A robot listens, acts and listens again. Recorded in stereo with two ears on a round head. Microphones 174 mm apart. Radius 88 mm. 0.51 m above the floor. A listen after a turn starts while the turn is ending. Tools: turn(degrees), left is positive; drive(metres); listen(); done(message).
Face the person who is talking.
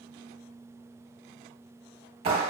listen()
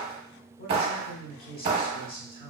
turn(degrees=45)
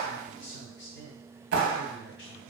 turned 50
turn(degrees=75)
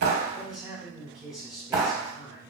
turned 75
done("Found it: a man speaking, straight ahead, 1 to 2 m away.")